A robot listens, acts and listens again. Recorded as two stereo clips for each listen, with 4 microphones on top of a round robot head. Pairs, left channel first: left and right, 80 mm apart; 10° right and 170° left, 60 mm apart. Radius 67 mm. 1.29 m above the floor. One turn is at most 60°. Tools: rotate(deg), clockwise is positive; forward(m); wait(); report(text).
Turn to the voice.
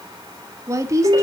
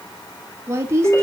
rotate(60)
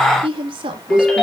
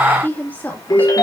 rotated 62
rotate(60)
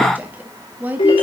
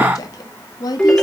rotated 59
rotate(20)
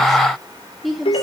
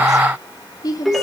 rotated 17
report("Found it: a woman speaking, straight ahead, 2 to 4 m away.")